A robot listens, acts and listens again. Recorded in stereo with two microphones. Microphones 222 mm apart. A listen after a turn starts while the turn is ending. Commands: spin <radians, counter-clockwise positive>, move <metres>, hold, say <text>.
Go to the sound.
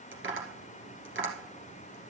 spin -1.05
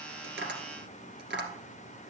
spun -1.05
spin -0.96
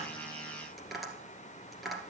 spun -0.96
move 1.0
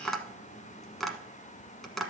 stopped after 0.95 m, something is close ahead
say I am next to the tapping.